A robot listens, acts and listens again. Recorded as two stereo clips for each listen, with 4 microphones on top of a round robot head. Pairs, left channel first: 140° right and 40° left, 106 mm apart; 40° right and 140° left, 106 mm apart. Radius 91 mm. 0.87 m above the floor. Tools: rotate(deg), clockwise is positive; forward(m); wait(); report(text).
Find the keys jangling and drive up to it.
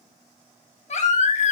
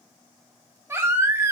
wait()
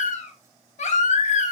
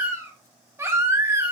wait()
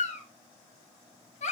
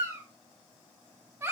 report("I can't make out keys jangling, only a baby crying.")